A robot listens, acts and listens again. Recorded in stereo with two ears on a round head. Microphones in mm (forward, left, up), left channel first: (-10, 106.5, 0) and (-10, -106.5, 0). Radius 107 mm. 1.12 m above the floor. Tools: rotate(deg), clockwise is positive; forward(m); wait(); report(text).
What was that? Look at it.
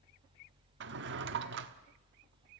rotate(50)
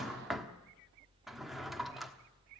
report("Facing the drawer, 1 to 2 m away.")